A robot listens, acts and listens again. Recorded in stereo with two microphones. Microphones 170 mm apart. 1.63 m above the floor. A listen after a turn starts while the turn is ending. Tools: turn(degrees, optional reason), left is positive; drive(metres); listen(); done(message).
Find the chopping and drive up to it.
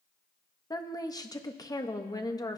listen()
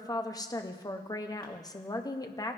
listen()
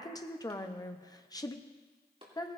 turn(degrees=-35, reason="The chopping: about 35° right or 145° right.")
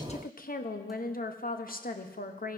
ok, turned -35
listen()
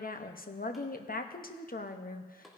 drive(metres=1.0)
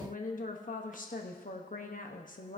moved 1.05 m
listen()
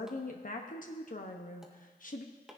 drive(metres=1.0)
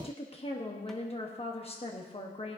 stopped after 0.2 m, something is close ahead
listen()
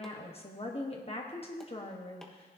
listen()
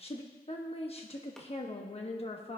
done("Facing where the chopping came from. I can't hear it now. I did not reach it.")